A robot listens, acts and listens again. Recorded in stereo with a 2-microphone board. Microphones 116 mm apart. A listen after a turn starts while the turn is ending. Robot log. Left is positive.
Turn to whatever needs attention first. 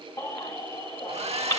note: The baby crying: about 25° left or 155° left.
cmd yaw +25
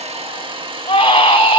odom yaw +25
note: So it is at 130° left.
cmd yaw +130
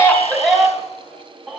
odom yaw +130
end: Found it: a baby crying, straight ahead, 1 to 2 m away.